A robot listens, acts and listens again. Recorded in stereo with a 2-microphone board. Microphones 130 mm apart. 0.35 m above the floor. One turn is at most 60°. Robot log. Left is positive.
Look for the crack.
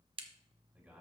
note: The crack: about 45° right or 135° right.
cmd yaw -45
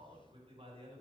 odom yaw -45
cmd idle
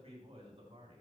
end: I heard a crack, but can't make it out now. It was about straight ahead or 90° right.